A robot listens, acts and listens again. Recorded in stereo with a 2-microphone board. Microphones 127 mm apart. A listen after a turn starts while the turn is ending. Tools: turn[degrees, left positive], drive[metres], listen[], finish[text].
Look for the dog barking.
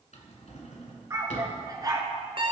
Thought: The dog barking: about 35° right or 145° right.
Action: turn[-35]
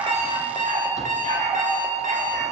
Thought: So it is at 95° right.
Action: turn[-95]
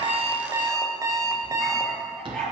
Action: finish[Facing the dog barking, 2 to 4 m away.]